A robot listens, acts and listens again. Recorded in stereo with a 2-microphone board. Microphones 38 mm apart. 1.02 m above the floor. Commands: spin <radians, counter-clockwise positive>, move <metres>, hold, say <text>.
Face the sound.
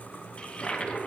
spin 0.44
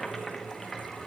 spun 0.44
say Facing the toilet flushing.